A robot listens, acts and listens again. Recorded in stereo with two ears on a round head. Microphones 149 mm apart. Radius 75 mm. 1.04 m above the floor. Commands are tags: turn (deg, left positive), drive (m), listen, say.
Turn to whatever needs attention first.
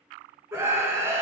<turn deg="-30"/>
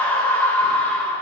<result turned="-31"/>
<turn deg="10"/>
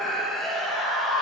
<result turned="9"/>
<say>Found it: a scream, straight ahead, 1 to 2 m away.</say>